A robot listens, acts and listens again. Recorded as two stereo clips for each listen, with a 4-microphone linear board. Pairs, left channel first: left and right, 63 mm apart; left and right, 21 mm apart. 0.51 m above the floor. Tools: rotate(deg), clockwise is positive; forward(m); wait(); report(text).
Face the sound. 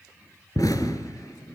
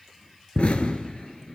rotate(-60)
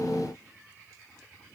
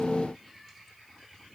wait()
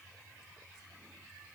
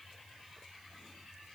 report("I heard an explosion, but can't make it out now. It was about straight ahead or 60° left.")